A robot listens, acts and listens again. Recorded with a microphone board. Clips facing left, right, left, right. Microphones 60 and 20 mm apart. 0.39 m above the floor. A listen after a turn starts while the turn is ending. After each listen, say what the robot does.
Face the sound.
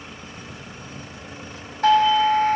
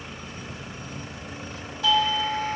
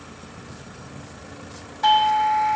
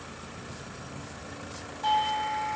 Turn 45° left.
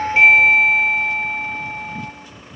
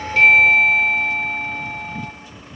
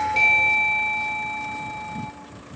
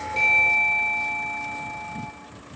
Turn 15° left.
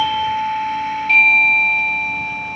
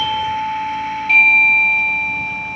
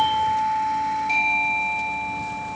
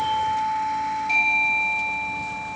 Found it: a doorbell, straight ahead.